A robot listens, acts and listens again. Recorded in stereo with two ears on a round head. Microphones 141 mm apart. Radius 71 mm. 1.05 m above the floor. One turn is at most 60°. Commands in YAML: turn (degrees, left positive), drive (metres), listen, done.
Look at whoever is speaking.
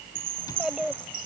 turn: -30
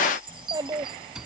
turn: -60
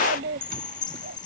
turn: -60
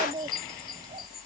turn: -30
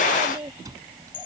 turn: -20
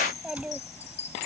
done: "Facing the child speaking."